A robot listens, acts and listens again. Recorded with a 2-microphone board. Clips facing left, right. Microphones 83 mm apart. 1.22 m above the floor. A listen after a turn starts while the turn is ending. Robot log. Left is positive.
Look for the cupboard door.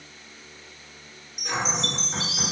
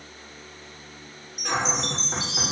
cmd yaw -90
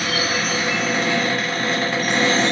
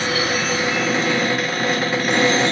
note: So it is at 10° right.
cmd yaw -10
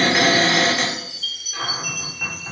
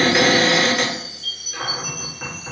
end: Facing the cupboard door, 1 to 2 m away.